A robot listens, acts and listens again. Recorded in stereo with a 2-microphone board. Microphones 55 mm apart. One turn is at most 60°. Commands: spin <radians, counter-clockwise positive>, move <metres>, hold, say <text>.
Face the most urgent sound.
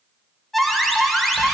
spin 0.52
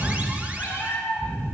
hold
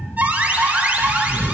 spin -0.44
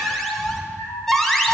say Found it: an alarm, straight ahead.